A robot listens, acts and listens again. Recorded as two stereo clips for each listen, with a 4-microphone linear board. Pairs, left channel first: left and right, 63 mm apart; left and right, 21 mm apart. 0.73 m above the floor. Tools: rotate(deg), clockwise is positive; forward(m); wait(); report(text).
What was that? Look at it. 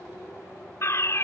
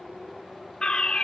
rotate(-45)
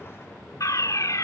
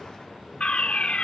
rotate(-85)
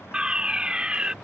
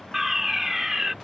rotate(15)
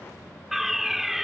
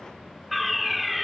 report("Found it: a fire alarm, straight ahead.")